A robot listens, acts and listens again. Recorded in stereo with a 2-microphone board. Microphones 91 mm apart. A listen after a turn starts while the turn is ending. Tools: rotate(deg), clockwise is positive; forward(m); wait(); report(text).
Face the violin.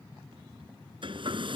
wait()
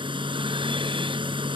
wait()
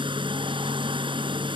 report("I can't make out a violin, only a hair dryer.")